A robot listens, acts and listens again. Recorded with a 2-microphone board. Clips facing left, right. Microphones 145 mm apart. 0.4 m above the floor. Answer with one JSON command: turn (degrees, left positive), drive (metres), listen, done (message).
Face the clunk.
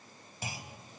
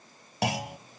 {"turn": -70}
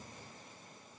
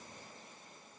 {"listen": true}
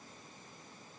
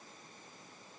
{"done": "I heard a clunk, but can't make it out now. It was about straight ahead or 40° right."}